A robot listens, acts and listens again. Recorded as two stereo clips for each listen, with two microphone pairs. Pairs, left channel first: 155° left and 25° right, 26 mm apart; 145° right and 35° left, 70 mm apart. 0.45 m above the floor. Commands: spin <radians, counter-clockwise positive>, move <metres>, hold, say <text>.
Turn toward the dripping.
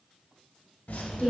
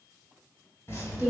spin 2.79
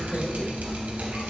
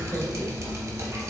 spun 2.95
spin -0.17
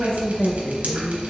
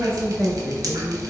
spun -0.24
say Found it: dripping, straight ahead, under 1 m away.